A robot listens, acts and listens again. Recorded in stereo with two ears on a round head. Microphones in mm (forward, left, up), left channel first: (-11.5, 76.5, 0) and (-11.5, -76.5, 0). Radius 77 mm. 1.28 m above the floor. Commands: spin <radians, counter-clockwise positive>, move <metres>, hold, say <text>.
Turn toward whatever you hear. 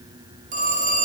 spin -0.87
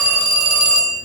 spin -1.40
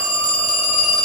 say Found it: a phone ringing, straight ahead, over 4 m away.